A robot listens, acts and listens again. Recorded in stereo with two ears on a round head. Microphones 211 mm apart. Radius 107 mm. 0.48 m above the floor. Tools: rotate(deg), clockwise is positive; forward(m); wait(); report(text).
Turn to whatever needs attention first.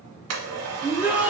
rotate(30)
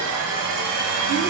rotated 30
wait()
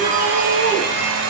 wait()
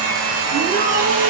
rotate(140)
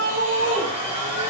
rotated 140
rotate(40)
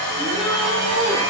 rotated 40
wait()
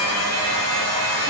wait()
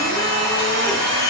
report("I heard a shout from this way, but can't make it out now.")